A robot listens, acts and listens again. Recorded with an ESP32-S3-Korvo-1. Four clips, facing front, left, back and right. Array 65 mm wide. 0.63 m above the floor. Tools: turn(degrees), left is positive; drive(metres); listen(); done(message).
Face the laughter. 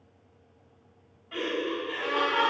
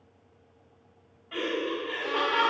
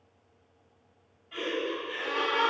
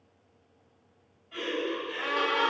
turn(degrees=70)
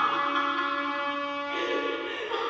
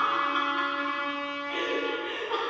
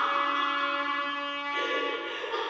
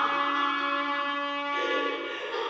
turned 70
turn(degrees=70)
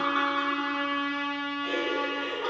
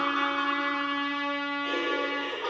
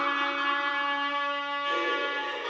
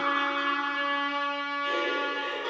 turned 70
turn(degrees=25)
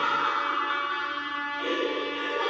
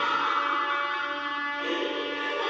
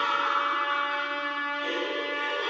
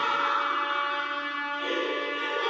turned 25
done("Facing the laughter.")